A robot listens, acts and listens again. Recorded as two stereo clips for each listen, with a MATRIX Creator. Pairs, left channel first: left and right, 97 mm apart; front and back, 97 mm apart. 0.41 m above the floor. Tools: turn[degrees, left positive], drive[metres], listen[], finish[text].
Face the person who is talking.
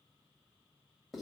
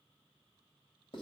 Action: listen[]
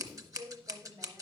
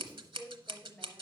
Thought: The woman speaking: 75° right.
Action: turn[-75]
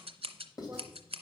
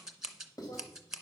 Action: listen[]
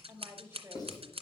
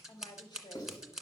Thought: The woman speaking is now 30° right.
Action: turn[-30]
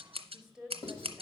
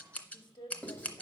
Action: finish[Facing the woman speaking.]